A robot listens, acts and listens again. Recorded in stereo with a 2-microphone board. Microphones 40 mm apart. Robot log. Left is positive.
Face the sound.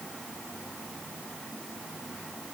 cmd idle
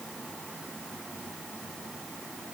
cmd idle
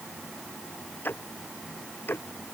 note: The ticking: about 55° left or 125° left.
cmd yaw +55
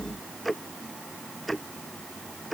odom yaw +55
end: Found it: ticking, straight ahead.